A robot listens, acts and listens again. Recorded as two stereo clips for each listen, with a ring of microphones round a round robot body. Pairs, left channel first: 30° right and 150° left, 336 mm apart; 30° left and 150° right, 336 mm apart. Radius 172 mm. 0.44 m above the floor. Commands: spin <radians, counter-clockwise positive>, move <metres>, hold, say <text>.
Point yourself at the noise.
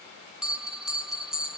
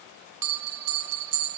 spin -2.09
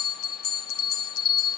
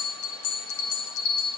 say Found it: a bell, straight ahead, under 1 m away.